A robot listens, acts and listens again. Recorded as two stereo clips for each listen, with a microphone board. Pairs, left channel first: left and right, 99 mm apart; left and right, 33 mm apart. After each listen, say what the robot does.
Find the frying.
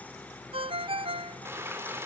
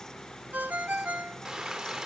Turn 25° right.
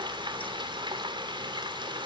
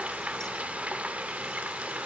Turn 130° right.
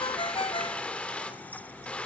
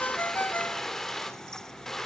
Turn 10° left.
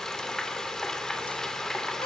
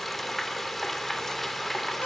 Facing the frying, 2 to 4 m away.